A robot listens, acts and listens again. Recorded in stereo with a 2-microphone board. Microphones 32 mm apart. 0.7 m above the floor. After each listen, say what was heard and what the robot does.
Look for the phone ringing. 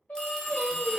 The phone ringing: about 25° left or 155° left. Turn 25° left.
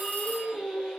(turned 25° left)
So it is at 125° left. Turn 125° left.
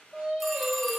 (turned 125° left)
Keep listening.
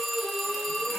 Facing the phone ringing, under 1 m away.